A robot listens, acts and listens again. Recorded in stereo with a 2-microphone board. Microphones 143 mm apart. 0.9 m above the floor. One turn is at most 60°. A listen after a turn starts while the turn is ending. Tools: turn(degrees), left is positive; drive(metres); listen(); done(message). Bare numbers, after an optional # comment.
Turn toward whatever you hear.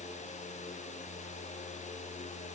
listen()
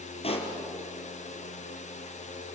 # The pop: about 45° left or 135° left.
turn(45)
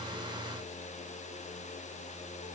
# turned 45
listen()
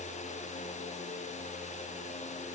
done("I heard a pop, but can't make it out now. It was about straight ahead or 90° left.")